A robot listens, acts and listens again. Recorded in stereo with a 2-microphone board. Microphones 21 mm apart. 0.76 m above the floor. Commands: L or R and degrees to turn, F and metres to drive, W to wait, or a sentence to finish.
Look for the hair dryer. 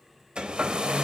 R50
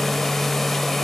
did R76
L15
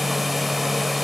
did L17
Found it: a hair dryer, straight ahead.